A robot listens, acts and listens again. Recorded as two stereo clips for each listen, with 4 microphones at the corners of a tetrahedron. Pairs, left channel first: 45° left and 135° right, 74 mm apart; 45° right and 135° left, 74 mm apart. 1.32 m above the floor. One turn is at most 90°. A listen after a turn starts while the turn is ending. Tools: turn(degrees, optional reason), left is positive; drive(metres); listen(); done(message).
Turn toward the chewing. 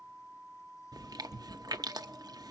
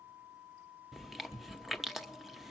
turn(degrees=-90, reason="The chewing: 135° right.")
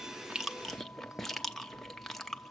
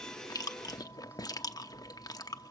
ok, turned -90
turn(degrees=-40, reason="The chewing is now 40° right.")
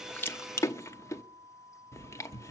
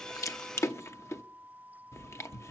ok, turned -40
done("Found it: chewing, straight ahead.")